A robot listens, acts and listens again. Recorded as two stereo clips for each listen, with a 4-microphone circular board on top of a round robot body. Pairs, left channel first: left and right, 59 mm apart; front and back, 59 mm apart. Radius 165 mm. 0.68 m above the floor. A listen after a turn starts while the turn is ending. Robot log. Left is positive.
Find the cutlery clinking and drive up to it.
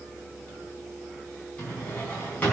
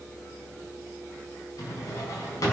cmd idle
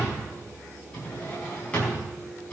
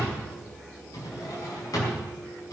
cmd idle
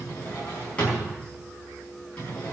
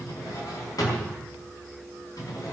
end: I can't make out cutlery clinking to turn to.